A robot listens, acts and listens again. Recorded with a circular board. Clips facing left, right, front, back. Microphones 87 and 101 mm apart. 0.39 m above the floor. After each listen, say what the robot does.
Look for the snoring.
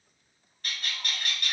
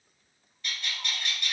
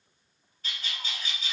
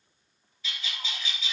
Keep listening.
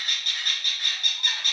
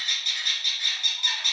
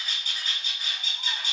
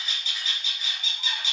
Keep listening.
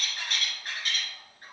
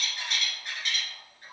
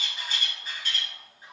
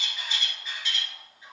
I can't make out snoring, only a bird.